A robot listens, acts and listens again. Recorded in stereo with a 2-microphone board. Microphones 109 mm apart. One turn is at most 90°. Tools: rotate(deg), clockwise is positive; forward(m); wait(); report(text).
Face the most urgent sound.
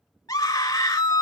rotate(-30)
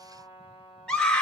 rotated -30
rotate(-10)
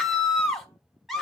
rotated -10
report("Facing the scream, 1 to 2 m away.")